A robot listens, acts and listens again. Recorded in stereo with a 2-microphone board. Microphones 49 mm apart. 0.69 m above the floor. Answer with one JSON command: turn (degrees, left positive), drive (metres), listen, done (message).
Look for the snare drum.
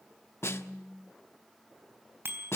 {"turn": 60}
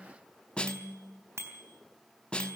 {"turn": 25}
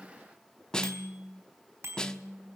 {"turn": 20}
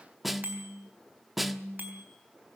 {"done": "Facing the snare drum, 1 to 2 m away."}